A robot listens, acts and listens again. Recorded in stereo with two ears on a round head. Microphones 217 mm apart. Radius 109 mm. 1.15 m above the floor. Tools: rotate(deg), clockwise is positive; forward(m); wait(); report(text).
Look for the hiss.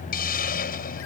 rotate(-40)
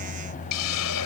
rotate(-100)
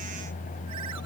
wait()
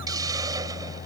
rotate(15)
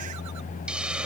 report("Found it: a hiss, straight ahead.")